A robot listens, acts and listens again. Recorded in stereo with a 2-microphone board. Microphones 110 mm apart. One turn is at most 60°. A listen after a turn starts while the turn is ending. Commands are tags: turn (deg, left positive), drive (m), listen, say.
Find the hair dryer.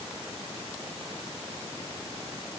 <listen/>
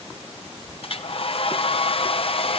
<turn deg="60"/>
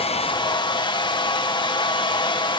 <turn deg="50"/>
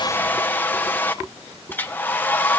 <turn deg="20"/>
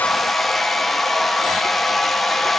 <say>Facing the hair dryer, 1 to 2 m away.</say>